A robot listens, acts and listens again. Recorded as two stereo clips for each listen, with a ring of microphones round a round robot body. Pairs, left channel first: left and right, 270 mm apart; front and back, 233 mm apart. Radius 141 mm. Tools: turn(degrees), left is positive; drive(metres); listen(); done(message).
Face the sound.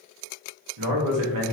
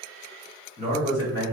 turn(degrees=-80)
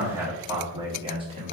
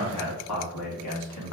turn(degrees=-20)
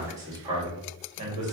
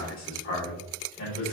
turn(degrees=-25)
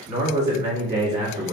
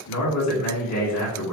turn(degrees=-10)
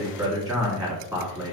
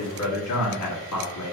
done("Facing the man speaking, 1 to 2 m away.")